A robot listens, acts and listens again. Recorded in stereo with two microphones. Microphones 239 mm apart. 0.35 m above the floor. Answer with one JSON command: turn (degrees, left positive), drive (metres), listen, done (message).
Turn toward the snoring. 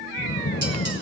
{"turn": 65}
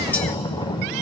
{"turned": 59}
{"turn": 25}
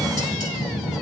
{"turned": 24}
{"done": "Found it: snoring, straight ahead, under 1 m away."}